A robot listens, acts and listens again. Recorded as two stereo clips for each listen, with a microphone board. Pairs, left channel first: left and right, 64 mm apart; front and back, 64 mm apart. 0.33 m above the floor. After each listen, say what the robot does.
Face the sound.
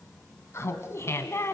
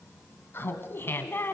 Turn 50° left.
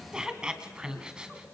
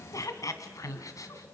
Turn 15° right.
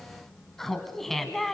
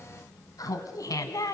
Found it: laughter, straight ahead.